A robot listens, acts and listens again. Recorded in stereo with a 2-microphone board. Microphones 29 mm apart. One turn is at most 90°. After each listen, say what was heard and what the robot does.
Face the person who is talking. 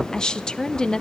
The woman speaking: about 25° left or 155° left. Turn 25° left.
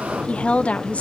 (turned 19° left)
So it is at 135° left. Turn 90° left.
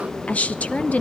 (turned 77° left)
The woman speaking is now 55° left. Turn 55° left.
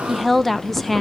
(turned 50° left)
Facing the woman speaking.